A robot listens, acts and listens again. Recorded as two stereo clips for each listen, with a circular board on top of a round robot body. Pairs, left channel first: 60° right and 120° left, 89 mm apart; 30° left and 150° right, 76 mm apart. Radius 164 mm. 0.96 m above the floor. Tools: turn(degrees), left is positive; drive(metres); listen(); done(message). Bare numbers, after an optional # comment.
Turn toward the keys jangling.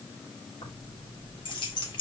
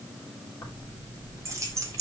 # The keys jangling: 100° right.
turn(-100)
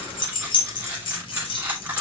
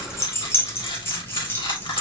# The keys jangling is now 35° right.
turn(-35)
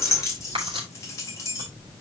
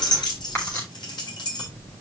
done("Found it: keys jangling, straight ahead, 2 to 4 m away.")